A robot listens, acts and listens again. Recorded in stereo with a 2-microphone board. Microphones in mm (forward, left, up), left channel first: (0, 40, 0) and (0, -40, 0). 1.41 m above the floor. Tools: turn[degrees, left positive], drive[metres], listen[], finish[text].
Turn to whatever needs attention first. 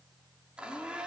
Action: listen[]
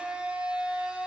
Action: listen[]
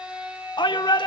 Thought: The shout: about 70° left or 110° left.
Action: turn[70]
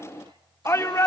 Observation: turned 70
Thought: So it is at 35° left.
Action: turn[35]
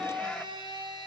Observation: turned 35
Action: listen[]
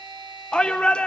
Thought: The shout is now 10° left.
Action: turn[10]
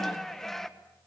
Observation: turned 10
Action: finish[Facing the shout, 1 to 2 m away.]